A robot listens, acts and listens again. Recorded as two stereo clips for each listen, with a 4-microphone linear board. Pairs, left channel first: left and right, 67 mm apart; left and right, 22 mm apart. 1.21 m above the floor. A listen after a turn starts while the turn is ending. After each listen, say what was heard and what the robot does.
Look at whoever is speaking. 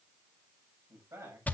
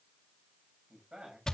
The man speaking: about 55° right or 125° right. Turn 55° right.
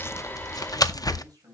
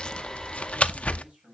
So it is at 70° right. Turn 70° right.
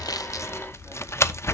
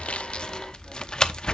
Keep listening.
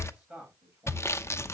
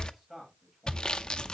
The man speaking is now 15° right. Turn 15° right.
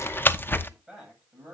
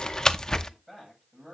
Facing the man speaking, over 4 m away.